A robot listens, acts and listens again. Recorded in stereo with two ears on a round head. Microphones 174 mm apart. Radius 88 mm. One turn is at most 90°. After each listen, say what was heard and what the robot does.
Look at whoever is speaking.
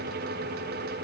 Keep listening.
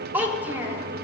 Turn 30° right.
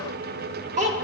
So it is at 140° right. Turn 90° right.
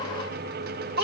The child speaking is now 50° right. Turn 50° right.
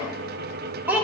The child speaking is now 10° right. Turn 10° right.
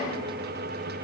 Keep listening.
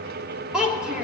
Found it: a child speaking, straight ahead, 1 to 2 m away.